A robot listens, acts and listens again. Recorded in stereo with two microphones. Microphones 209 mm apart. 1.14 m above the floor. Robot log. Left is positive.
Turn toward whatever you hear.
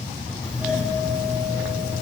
cmd yaw -30
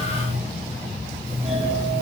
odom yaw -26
note: So it is at 150° right.
cmd yaw -150
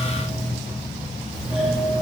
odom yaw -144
end: Facing the doorbell, 2 to 4 m away.